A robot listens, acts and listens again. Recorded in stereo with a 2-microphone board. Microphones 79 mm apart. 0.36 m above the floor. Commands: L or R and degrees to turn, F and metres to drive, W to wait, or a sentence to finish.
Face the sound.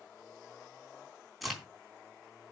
L30
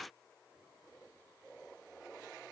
W
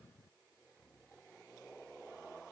I heard a crack, but can't make it out now. It was about 30° right or 150° left.